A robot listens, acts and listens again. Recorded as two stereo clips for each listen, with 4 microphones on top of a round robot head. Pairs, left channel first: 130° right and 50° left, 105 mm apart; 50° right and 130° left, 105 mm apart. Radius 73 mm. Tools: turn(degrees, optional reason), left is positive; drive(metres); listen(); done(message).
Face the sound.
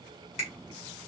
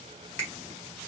turn(degrees=-120, reason="The finger snap: 120° right.")
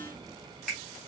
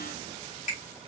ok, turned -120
turn(degrees=-50, reason="The finger snap is now 50° right.")
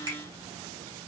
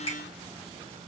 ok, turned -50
turn(degrees=-15, reason="The finger snap is now 15° right.")
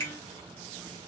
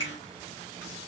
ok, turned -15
done("Found it: a finger snap, straight ahead, 2 to 4 m away.")